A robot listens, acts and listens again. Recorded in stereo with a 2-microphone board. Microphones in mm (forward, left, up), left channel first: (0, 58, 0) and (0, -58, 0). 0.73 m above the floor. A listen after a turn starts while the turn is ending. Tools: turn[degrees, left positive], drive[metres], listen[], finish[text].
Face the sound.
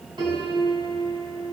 Thought: The piano: about 40° right or 140° right.
Action: turn[-40]
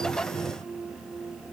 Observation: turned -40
Thought: So it is at 105° right.
Action: turn[-105]
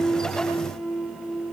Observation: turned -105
Action: finish[Facing the piano.]